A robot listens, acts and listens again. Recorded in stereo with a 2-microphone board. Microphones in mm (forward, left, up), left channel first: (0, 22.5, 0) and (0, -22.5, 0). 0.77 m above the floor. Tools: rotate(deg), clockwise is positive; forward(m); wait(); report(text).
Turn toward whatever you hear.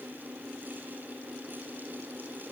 wait()
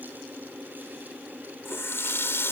rotate(-70)
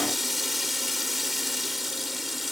report("Found it: a running tap, straight ahead.")